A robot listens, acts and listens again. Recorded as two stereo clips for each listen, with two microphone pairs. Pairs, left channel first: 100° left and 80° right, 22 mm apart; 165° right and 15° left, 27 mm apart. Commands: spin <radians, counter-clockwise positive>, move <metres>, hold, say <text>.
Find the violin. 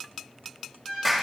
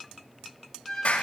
spin 2.09
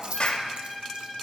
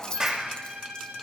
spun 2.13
say Found it: a violin, straight ahead, 2 to 4 m away.